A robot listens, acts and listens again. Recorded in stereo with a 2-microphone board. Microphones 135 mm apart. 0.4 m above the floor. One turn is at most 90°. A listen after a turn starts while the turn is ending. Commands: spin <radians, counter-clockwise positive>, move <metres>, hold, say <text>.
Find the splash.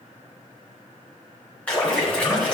spin 0.52
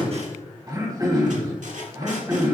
hold
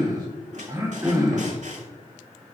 say I heard a splash, but can't make it out now. It was about 20° right or 140° left.